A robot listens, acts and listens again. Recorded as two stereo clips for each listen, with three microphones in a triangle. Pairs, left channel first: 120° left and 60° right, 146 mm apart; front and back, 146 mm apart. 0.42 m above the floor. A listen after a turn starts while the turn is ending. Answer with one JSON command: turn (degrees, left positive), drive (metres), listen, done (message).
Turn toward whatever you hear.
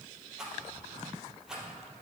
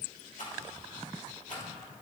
{"turn": 25}
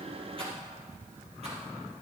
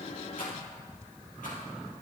{"listen": true}
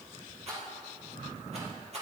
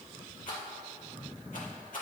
{"turn": -20}
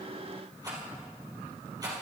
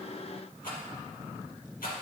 {"done": "Found it: a rattle, straight ahead."}